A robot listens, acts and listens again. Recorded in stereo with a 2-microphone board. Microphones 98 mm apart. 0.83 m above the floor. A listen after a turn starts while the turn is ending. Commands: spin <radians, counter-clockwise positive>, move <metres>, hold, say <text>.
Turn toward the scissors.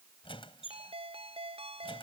hold
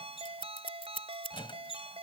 spin 1.22
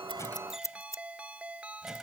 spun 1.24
spin 0.61
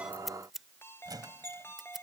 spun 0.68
say Facing the scissors.